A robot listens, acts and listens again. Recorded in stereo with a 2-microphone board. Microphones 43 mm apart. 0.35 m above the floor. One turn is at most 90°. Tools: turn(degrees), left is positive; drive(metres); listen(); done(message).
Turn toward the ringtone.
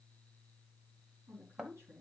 listen()
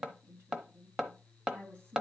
listen()
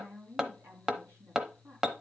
done("I can't make out a ringtone, only hammering and a woman speaking.")